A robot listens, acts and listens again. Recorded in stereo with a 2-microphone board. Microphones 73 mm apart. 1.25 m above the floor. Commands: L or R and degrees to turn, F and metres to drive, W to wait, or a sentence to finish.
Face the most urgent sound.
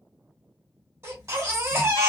R40
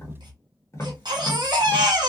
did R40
R100
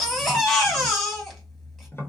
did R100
Facing the baby crying.